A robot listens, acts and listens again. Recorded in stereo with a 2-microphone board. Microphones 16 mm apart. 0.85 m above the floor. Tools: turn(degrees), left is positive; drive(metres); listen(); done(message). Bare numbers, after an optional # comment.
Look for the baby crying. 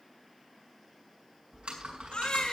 turn(90)
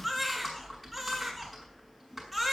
# So it is at 10° left.
turn(10)
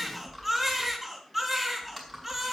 done("Facing the baby crying.")